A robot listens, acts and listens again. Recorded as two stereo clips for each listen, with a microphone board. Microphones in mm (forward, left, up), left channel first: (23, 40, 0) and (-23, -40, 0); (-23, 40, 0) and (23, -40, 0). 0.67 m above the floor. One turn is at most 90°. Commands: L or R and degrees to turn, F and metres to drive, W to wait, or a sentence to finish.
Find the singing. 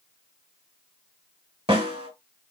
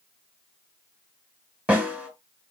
W
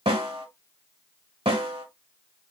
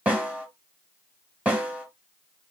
W
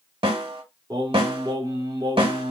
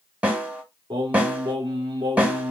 R90
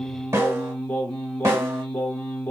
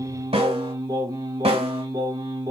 R10
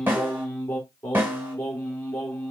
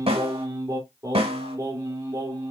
Facing the singing, 1 to 2 m away.